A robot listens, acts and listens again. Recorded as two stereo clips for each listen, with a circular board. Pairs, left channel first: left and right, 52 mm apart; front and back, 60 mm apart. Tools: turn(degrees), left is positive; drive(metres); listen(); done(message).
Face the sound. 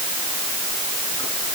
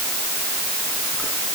listen()
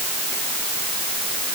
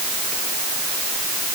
listen()
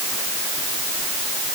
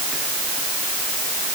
done("I can't make out anything.")